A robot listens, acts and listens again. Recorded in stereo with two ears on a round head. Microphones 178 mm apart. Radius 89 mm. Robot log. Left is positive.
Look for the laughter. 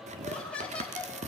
cmd yaw +30
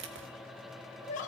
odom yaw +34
note: So it is at 140° left.
cmd yaw +140
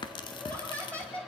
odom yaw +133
end: Found it: laughter, straight ahead.